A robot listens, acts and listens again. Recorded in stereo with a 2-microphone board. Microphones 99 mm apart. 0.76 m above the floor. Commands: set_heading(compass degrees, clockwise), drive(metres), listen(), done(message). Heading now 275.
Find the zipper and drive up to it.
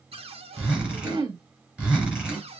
set_heading(305)
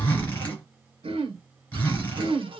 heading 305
set_heading(285)
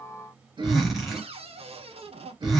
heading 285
drive(1.0)
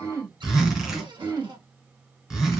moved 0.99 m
drive(1.0)
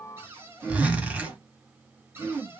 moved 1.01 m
set_heading(300)
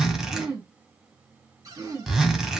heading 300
drive(1.0)
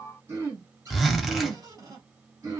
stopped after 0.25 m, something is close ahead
done("Arrived at the zipper, straight ahead.")